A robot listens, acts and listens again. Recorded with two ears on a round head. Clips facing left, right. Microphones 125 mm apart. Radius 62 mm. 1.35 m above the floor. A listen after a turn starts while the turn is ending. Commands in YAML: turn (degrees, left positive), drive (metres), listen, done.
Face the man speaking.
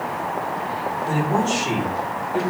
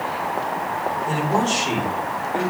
turn: 30
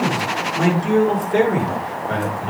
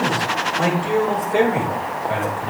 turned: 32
turn: 125
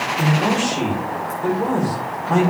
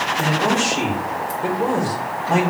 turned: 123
done: "Facing the man speaking, over 4 m away."